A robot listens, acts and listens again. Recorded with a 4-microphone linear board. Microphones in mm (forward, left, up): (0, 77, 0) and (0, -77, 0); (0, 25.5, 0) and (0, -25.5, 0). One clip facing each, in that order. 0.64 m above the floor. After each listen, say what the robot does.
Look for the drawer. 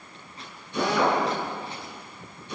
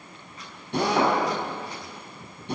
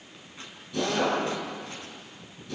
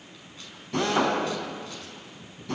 Keep listening.
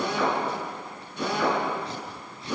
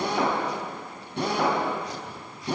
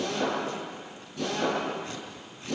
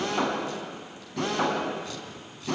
Keep listening.
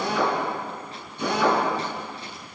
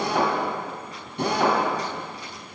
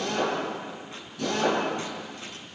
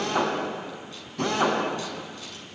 I can't make out a drawer, only a drill.